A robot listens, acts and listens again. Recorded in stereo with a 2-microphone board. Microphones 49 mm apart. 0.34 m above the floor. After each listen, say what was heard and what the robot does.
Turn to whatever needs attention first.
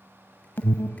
The alarm: about 50° left or 130° left. Turn 50° left.
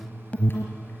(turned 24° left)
So it is at 35° left. Turn 35° left.
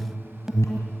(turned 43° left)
The alarm is now 15° right. Turn 15° right.
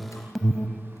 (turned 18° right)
Facing the alarm, 1 to 2 m away.